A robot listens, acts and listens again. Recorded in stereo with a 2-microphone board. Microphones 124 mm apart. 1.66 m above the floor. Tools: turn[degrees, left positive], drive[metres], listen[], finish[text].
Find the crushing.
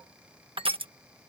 Thought: The crushing: about 50° right or 130° right.
Action: turn[-50]
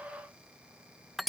Action: finish[Found it: crushing, straight ahead.]